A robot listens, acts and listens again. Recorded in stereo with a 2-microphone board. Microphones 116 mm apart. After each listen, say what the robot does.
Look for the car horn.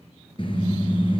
Turn 45° left.
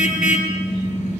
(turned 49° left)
Turn 85° left.
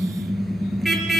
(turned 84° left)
Found it: a car horn, straight ahead, 2 to 4 m away.